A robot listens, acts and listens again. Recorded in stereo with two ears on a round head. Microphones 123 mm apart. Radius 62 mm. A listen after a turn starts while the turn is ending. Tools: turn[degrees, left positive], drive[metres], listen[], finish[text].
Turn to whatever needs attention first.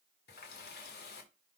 Action: listen[]
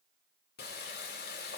Action: listen[]
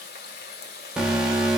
Action: turn[-30]
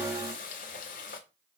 Action: listen[]
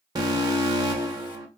Thought: So it is at 145° right.
Action: turn[-145]
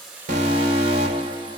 Thought: The alarm is now 40° right.
Action: turn[-40]
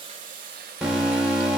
Action: finish[Facing the alarm.]